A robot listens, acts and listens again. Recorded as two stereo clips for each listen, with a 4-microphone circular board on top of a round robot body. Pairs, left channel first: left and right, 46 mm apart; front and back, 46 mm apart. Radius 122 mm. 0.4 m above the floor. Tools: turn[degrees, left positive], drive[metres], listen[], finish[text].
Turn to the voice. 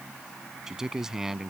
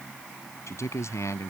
Thought: The man speaking: 10° right.
Action: turn[-10]
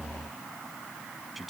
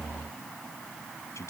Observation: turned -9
Action: finish[Found it: a man speaking, straight ahead.]